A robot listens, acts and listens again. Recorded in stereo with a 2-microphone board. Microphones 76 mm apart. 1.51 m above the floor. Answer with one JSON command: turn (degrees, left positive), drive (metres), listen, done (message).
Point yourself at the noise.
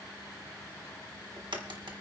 {"turn": -90}
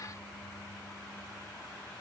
{"done": "Facing where the crack came from. I can't hear it now."}